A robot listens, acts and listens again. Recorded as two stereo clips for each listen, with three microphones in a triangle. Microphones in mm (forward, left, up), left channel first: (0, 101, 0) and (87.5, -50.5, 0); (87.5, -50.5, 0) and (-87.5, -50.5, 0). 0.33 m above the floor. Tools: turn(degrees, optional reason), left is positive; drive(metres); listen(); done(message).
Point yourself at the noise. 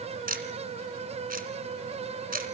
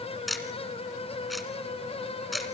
turn(degrees=-90, reason="The ticking: 90° right.")
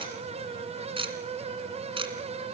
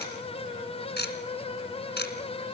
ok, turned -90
done("Found it: ticking, straight ahead, 2 to 4 m away.")